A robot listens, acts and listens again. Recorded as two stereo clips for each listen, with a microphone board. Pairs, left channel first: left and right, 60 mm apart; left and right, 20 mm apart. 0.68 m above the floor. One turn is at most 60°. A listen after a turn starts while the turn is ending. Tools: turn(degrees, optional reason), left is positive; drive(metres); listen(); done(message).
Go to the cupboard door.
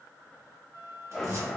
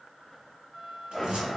turn(degrees=-60, reason="The cupboard door: about 60° right or 120° right.")
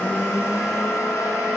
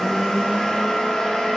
listen()
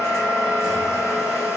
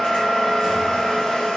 listen()
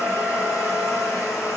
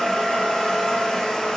done("I heard a cupboard door, but can't make it out now. It was about straight ahead or 60° right. I did not reach it.")